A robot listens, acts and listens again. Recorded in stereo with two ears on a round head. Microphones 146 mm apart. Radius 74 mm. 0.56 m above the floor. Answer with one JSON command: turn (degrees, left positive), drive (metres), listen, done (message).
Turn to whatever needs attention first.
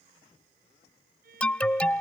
{"turn": 30}
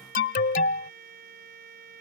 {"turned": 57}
{"turn": 115}
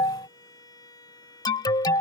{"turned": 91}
{"turn": 25}
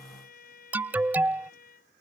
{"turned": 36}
{"turn": -10}
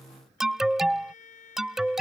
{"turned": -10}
{"done": "Found it: an alarm, straight ahead."}